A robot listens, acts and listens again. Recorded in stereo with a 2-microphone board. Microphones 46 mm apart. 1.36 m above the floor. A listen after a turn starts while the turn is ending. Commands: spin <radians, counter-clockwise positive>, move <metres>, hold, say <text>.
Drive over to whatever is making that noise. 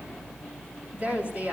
spin -0.61
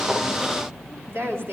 spin -1.92
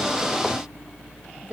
spin -0.44
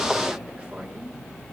hold
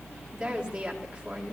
spin -0.35
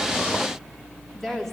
move 1.0
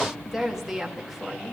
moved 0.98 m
move 1.0
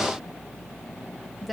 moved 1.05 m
move 1.0
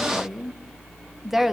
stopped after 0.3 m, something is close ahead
say Arrived at the woman speaking, straight ahead.